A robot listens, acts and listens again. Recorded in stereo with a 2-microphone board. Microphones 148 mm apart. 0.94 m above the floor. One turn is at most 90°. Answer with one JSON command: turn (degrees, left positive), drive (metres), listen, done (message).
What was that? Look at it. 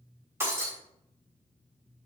{"turn": -15}
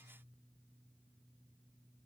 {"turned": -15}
{"listen": true}
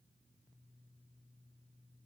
{"done": "I heard breaking glass, but can't make it out now. It was about straight ahead or 150° right."}